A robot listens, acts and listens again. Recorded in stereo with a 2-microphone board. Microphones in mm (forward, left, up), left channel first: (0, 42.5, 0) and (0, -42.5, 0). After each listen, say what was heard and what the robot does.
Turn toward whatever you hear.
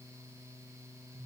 Keep listening.
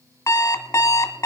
The alarm clock: about 40° left or 140° left. Turn 40° left.
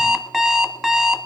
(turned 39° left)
Facing the alarm clock, 1 to 2 m away.